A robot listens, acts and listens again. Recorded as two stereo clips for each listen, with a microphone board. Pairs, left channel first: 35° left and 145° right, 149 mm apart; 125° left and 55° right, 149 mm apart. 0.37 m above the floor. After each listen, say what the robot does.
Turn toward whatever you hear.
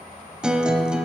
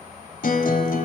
Turn 130° left.
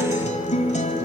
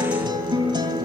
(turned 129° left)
Facing the guitar.